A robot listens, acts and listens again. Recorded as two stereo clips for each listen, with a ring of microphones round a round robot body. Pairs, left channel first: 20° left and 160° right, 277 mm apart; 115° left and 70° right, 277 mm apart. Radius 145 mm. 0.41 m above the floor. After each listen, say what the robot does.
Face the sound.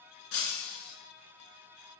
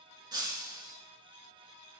Turn 10° left.
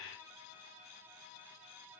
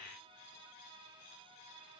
I heard breaking glass from this way, but can't make it out now.